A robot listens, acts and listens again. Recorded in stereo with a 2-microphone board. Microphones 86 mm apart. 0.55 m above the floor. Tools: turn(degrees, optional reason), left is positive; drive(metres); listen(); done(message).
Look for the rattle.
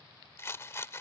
turn(degrees=30, reason="The rattle: about 30° left or 150° left.")
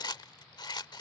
turn(degrees=120, reason="So it is at 120° left.")
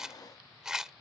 done("Found it: a rattle, straight ahead.")